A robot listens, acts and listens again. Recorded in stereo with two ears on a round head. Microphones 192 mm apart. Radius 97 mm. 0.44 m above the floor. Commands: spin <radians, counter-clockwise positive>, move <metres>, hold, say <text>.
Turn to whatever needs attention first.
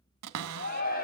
spin 0.79
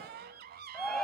say Found it: a shout, straight ahead, 2 to 4 m away.